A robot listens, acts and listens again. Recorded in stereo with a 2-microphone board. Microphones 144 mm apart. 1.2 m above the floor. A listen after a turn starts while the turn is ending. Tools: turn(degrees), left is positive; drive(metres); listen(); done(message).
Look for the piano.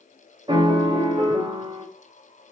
turn(degrees=-35)
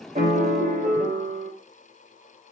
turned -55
turn(degrees=-85)
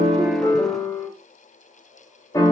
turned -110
turn(degrees=25)
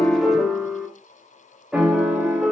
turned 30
done("Facing the piano, 1 to 2 m away.")